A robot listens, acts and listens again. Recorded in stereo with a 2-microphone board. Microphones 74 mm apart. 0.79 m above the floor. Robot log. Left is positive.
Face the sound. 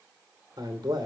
note: The man speaking: about 60° right or 120° right.
cmd yaw -60
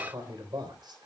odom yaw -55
note: So it is at 65° right.
cmd yaw -65
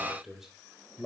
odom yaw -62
end: Facing the man speaking.